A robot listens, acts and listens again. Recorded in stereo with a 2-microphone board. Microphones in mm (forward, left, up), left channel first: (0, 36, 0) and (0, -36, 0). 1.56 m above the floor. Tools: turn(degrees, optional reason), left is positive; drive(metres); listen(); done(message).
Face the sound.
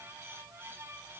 listen()
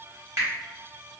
turn(degrees=-40, reason="The finger snap: about 40° right or 140° right.")
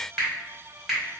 done("Facing the finger snap.")